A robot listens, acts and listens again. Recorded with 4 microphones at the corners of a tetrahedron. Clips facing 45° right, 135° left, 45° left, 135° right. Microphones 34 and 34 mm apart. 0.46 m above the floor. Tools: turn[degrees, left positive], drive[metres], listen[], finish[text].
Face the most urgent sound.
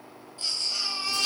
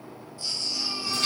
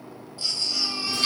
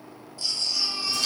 Thought: The baby crying: 10° right.
Action: turn[-10]
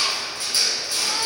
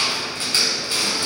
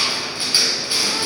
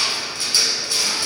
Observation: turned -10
Action: listen[]
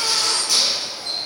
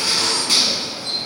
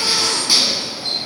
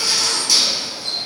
Action: listen[]
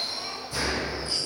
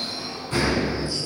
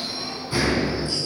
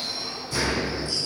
Action: finish[Facing where the baby crying came from. I can't hear it now.]